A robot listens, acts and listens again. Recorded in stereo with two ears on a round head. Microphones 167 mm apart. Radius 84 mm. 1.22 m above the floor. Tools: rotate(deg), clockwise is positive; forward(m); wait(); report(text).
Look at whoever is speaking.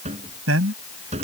rotate(90)
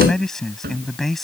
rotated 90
report("Found it: a man speaking, straight ahead.")